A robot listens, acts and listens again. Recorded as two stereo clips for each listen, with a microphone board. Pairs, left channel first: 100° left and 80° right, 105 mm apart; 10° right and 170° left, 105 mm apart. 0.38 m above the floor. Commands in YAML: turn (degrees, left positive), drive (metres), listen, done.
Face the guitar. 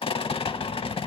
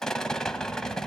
listen: true
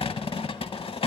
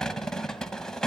listen: true
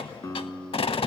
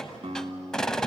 turn: 155
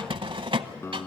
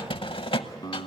turn: 35
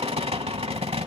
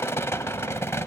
listen: true
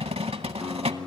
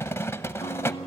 done: "Facing the guitar."